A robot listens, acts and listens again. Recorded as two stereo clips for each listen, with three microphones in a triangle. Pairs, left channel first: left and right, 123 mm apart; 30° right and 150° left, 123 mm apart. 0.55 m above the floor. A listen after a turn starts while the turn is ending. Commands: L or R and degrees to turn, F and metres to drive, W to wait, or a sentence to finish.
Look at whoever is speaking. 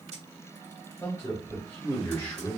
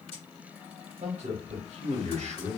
L160
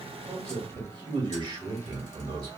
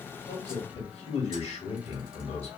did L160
R40
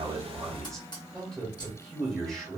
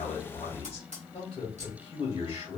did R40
Facing the man speaking, 1 to 2 m away.